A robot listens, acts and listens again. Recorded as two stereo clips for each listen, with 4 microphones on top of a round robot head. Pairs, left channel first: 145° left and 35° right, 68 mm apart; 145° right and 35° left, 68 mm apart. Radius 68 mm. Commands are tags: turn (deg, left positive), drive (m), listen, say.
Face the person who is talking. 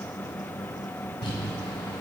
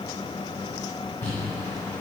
<listen/>
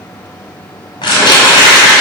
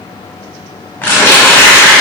<listen/>
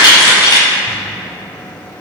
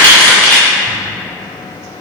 <say>I can't make out anyone speaking, only crumpling.</say>